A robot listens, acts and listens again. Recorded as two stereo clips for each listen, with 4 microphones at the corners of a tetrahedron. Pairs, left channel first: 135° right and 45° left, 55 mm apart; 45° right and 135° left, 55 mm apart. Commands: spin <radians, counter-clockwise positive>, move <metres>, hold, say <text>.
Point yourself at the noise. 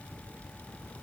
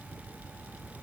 hold
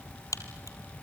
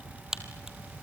spin -2.53
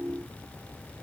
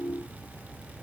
say I heard a crack from this way, but can't make it out now.